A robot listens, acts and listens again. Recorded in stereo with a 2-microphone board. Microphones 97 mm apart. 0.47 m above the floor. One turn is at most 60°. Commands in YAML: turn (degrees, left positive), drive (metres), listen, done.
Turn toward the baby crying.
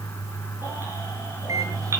listen: true
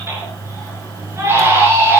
turn: -25
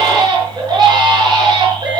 turn: -60
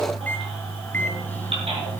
turn: -60
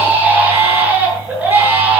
turn: -20
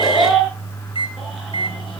done: "Facing the baby crying, over 4 m away."